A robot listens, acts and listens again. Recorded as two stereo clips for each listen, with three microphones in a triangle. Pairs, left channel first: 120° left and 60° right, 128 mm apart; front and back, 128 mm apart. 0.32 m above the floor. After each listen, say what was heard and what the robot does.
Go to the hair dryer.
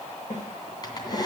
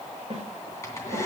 The hair dryer: 65° left. Turn 65° left.
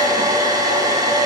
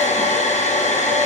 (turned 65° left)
Drive 1.0 m forward.
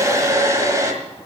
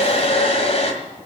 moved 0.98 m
Drive 1.0 m forward.
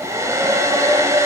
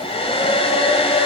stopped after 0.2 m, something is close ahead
I am next to the hair dryer.